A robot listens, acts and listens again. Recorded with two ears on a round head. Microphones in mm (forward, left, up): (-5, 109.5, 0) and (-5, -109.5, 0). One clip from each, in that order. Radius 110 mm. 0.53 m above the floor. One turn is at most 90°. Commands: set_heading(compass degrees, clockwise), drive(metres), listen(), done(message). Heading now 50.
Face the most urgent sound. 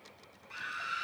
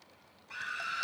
set_heading(65)
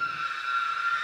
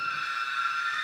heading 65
set_heading(155)
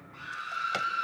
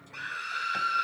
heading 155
set_heading(225)
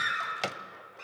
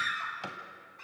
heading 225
done("Found it: a scream, straight ahead, over 4 m away.")